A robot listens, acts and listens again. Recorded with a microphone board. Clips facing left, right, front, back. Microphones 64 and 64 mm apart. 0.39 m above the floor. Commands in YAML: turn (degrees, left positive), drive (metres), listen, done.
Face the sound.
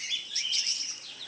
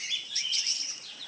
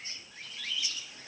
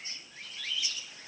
listen: true
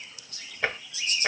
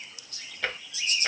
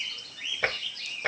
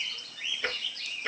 turn: 20
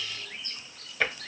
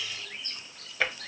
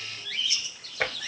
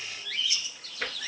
done: "Facing the tapping."